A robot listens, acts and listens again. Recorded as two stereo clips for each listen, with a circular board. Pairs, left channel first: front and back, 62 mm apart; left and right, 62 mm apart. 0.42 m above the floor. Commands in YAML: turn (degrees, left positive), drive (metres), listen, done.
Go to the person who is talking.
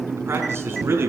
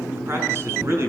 turn: -130
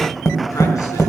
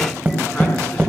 listen: true
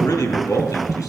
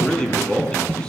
turn: 15
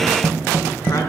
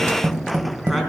listen: true
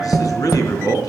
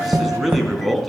drive: 1.0
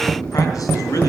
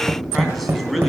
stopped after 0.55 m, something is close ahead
done: "Blocked. The man speaking is further on, straight ahead."